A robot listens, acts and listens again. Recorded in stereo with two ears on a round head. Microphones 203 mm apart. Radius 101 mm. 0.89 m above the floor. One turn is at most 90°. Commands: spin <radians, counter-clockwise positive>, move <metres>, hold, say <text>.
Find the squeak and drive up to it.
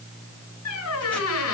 spin 1.31
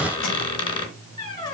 spin 0.44
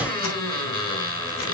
spin 0.35
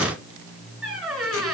move 1.0
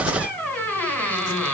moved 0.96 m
move 1.0
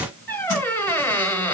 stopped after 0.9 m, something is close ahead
spin 0.17
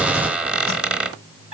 say I am next to the squeak.